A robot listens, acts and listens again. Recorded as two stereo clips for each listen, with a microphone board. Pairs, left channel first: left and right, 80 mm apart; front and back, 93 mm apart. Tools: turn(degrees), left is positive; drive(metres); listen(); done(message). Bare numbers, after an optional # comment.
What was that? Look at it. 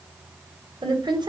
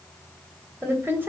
# The woman speaking: 115° right.
turn(-115)
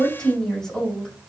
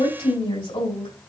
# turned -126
done("Found it: a woman speaking, straight ahead, 2 to 4 m away.")